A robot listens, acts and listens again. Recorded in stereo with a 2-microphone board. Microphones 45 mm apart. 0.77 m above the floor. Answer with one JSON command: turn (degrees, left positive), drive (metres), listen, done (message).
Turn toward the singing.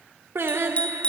{"turn": -65}
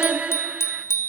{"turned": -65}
{"turn": -30}
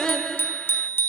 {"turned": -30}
{"turn": 15}
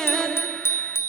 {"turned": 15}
{"turn": 15}
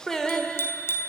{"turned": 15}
{"turn": 15}
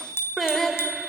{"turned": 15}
{"done": "Found it: singing, straight ahead, 2 to 4 m away."}